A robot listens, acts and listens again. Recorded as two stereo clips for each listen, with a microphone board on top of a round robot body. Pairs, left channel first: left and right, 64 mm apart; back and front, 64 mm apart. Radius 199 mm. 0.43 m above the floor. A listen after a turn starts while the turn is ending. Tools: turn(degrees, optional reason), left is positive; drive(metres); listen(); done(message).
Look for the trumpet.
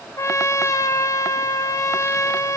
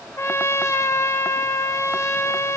turn(degrees=130, reason="The trumpet: 130° left.")
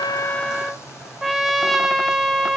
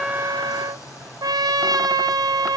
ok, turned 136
done("Facing the trumpet.")